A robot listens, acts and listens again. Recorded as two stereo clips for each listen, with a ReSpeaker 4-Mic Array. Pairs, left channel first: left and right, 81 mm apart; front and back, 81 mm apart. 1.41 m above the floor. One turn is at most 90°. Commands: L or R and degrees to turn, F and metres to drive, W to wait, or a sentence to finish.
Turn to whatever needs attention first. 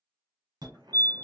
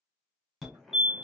R90
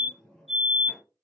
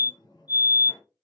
Found it: a fire alarm, straight ahead, 1 to 2 m away.